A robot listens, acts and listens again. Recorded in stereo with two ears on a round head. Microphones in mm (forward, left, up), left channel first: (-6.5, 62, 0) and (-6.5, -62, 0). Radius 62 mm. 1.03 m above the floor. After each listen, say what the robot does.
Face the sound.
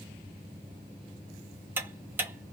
Turn 15° right.
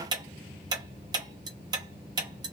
Turn 150° right.
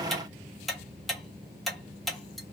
Found it: ticking, straight ahead, under 1 m away.